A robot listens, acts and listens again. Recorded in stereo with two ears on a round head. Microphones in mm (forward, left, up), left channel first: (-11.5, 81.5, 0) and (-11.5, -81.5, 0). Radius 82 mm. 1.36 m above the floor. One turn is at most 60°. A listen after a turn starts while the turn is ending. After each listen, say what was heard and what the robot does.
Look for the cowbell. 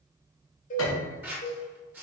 The cowbell: about 45° left or 135° left. Turn 45° left.
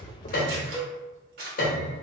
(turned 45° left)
So it is at 10° left. Turn 10° left.
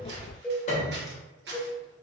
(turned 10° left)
Facing the cowbell.